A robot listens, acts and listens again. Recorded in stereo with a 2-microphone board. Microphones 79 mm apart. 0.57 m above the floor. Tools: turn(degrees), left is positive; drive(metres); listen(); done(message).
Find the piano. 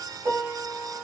turn(degrees=-50)
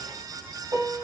turn(degrees=-75)
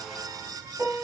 turn(degrees=-30)
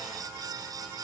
listen()
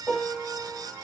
done("Facing the piano, 1 to 2 m away.")